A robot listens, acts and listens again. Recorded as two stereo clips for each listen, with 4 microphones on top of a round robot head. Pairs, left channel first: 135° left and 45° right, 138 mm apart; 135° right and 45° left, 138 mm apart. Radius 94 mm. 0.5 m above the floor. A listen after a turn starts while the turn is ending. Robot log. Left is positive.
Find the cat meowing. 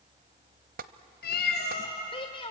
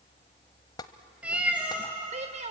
note: The cat meowing: 130° left.
cmd yaw +130
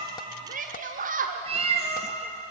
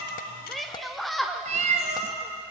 end: Facing the cat meowing, 2 to 4 m away.